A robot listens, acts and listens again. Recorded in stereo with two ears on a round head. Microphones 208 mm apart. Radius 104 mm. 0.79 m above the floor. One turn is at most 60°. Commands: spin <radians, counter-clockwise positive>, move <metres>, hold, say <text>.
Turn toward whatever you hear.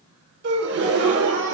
spin -0.79
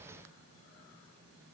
hold
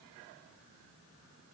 say I heard a gasp, but can't make it out now. It was about straight ahead or 90° right.